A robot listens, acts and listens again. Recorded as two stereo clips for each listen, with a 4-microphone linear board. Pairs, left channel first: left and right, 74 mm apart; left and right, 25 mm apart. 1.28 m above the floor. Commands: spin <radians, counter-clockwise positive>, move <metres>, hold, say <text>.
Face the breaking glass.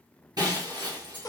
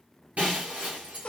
spin -1.13
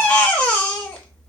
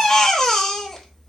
hold
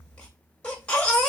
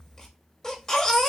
say I heard breaking glass, but can't make it out now. It was about straight ahead or 50° right.